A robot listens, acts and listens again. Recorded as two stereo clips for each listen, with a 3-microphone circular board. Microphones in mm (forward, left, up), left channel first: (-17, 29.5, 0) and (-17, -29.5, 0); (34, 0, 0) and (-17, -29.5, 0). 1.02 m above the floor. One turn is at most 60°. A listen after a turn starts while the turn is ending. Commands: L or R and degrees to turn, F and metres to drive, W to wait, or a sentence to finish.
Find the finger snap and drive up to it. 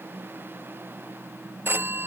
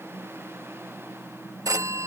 W
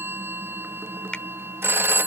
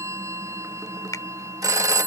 L15
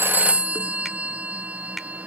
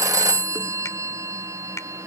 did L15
W
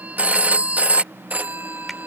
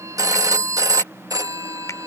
W
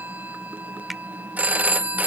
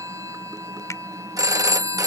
I heard a finger snap from this way, but can't make it out now. I did not reach it.